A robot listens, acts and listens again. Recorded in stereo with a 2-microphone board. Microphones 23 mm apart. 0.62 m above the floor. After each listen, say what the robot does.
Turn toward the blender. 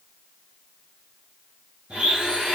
Turn 70° right.
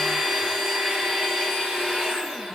Turn 35° right.
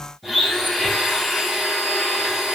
Found it: a blender, straight ahead.